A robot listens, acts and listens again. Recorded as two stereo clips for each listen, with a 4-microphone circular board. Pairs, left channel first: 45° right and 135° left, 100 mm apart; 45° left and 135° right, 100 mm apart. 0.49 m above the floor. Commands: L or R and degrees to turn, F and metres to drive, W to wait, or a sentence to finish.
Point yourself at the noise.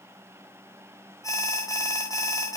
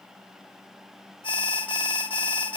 L10
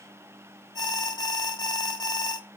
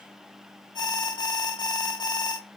Facing the alarm.